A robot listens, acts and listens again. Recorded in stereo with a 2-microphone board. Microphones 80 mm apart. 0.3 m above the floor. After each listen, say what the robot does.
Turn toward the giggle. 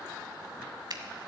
Keep listening.
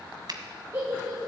Turn 30° right.
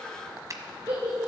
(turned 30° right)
Turn 120° right.
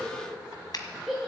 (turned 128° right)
Facing the giggle.